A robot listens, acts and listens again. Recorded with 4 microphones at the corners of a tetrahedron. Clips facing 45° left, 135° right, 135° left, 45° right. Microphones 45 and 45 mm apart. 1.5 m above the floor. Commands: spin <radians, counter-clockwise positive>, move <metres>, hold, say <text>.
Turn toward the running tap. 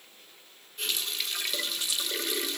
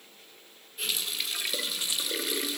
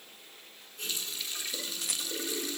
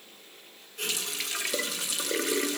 spin -0.87
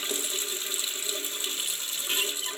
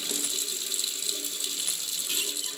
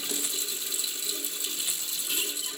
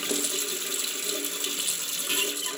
spin -0.26
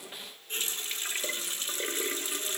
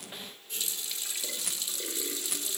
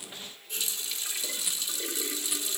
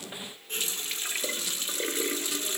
say Facing the running tap.